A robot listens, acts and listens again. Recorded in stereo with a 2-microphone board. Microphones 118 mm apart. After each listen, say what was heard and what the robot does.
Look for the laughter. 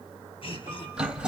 The laughter: about 50° left or 130° left. Turn 50° left.
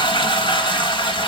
Keep listening.
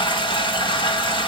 Keep listening.
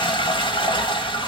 I heard laughter, but can't make it out now. It was about straight ahead or 80° left.